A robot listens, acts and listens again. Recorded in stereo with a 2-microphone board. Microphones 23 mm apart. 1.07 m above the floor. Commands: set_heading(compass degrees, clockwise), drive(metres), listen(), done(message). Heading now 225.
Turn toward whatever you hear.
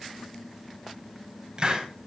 set_heading(255)
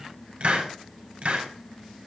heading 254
set_heading(14)
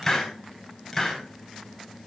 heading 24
set_heading(14)
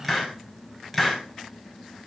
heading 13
done("Found it: a hiss, straight ahead, over 4 m away.")